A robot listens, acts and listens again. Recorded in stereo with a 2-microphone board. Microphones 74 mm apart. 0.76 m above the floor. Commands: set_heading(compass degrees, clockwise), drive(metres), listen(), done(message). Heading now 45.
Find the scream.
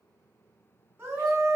set_heading(75)
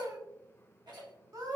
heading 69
set_heading(189)
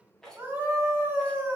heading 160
set_heading(190)
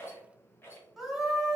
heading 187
done("Facing the scream.")